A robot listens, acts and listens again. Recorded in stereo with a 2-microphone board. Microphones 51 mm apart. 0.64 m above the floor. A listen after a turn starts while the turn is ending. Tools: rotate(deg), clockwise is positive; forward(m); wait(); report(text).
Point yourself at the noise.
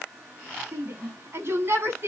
rotate(50)
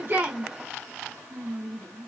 report("Facing the shout.")